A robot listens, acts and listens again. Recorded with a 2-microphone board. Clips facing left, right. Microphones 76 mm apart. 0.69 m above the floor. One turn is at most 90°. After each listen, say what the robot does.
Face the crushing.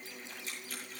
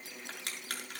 Turn 70° right.
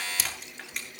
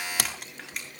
Facing the crushing, over 4 m away.